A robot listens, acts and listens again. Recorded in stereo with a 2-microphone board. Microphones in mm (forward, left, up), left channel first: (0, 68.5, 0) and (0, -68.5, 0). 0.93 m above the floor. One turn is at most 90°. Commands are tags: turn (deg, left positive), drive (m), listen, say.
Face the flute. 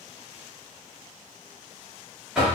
<listen/>
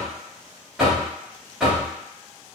<listen/>
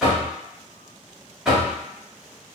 <say>I can't make out a flute to turn to.</say>